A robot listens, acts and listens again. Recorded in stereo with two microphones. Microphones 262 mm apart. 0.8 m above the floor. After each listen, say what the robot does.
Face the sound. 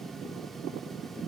Keep listening.
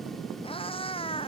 Turn 20° left.
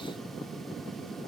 Keep listening.
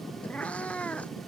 Turn 30° left.
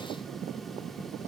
Keep listening.
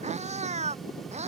Turn 25° right.
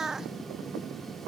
Facing the cat meowing.